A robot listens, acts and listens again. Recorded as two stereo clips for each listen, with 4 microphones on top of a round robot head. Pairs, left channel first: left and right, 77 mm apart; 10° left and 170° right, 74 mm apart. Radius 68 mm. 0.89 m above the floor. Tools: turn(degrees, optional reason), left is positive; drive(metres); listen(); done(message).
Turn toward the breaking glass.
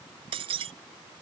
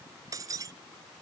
turn(degrees=-115, reason="The breaking glass: 115° right.")
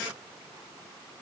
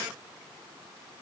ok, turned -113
done("I heard breaking glass from this way, but can't make it out now.")